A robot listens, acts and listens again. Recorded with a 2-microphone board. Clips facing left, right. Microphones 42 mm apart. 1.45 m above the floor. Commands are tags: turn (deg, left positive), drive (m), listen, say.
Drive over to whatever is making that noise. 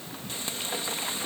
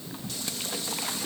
<turn deg="35"/>
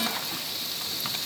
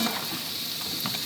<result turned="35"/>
<drive m="1.0"/>
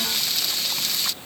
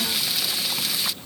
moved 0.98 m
<drive m="1.0"/>
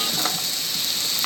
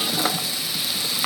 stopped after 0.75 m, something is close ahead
<turn deg="-10"/>
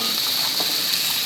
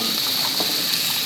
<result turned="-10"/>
<say>Arrived at the frying, straight ahead.</say>